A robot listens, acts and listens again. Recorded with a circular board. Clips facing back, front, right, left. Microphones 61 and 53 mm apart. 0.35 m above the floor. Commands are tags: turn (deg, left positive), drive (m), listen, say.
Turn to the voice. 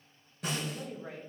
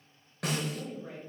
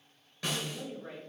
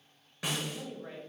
<turn deg="160"/>
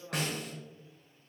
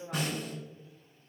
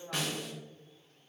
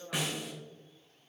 <turn deg="-45"/>
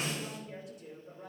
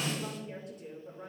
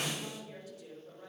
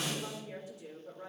<turn deg="25"/>
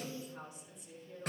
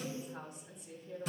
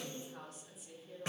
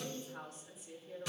<say>Facing the woman speaking.</say>